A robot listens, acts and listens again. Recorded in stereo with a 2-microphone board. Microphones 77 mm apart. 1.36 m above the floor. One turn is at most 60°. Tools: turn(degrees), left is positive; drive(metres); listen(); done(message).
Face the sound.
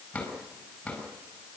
turn(degrees=30)
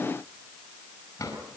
turn(degrees=60)
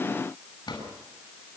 turn(degrees=60)
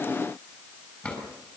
turn(degrees=20)
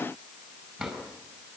done("Found it: a drawer, straight ahead, over 4 m away.")